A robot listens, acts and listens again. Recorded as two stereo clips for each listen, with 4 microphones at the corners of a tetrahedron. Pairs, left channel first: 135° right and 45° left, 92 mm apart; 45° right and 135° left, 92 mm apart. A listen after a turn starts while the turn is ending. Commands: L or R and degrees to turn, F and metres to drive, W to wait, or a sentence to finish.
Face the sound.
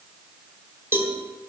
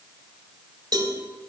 L105
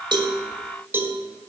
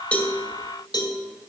R20
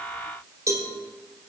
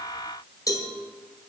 Found it: a cowbell, straight ahead.